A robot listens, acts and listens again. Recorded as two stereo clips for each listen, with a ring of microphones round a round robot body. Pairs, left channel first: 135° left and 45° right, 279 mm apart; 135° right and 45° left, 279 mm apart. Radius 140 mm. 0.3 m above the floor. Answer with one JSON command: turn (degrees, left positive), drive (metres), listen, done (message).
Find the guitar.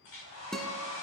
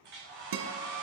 {"turn": 45}
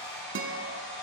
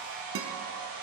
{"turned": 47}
{"done": "Found it: a guitar, straight ahead, 1 to 2 m away."}